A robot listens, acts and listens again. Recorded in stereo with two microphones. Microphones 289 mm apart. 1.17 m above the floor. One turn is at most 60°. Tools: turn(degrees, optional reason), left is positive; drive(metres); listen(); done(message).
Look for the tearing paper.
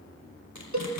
turn(degrees=60)
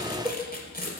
turn(degrees=30, reason="So it is at 30° left.")
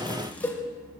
listen()
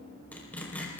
done("Facing the tearing paper.")